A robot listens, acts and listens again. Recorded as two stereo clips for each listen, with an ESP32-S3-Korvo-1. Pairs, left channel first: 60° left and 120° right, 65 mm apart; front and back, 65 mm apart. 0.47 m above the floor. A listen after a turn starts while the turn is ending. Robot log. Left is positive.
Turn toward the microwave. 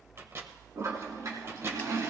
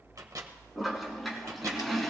note: The microwave: 160° right.
cmd yaw -160
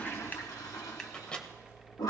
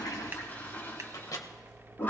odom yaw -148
note: The microwave is now 15° right.
cmd yaw -15
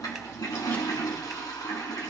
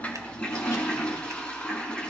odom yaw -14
cmd idle
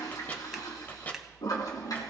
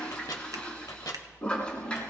end: Facing the microwave.